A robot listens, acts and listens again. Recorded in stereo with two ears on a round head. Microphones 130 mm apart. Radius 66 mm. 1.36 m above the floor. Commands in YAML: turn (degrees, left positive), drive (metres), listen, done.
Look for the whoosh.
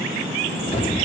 turn: 40
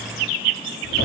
listen: true
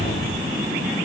turn: 95
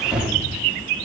done: "Facing the whoosh."